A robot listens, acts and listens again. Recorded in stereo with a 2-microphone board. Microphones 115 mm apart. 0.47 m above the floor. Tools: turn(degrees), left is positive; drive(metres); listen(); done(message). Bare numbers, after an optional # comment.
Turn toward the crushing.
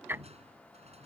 # The crushing: about 65° right or 115° right.
turn(-65)
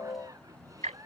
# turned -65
listen()
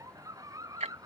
listen()
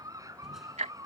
done("I heard crushing, but can't make it out now. It was about straight ahead or 50° right.")